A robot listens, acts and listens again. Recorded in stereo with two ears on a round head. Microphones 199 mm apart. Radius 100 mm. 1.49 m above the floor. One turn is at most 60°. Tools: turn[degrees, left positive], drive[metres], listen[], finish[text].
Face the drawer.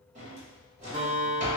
Thought: The drawer: about 35° right or 145° right.
Action: turn[-35]
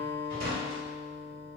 Thought: So it is at 105° right.
Action: turn[-60]
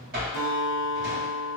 Thought: The drawer is now 45° right.
Action: turn[-45]
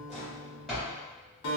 Action: finish[Found it: a drawer, straight ahead.]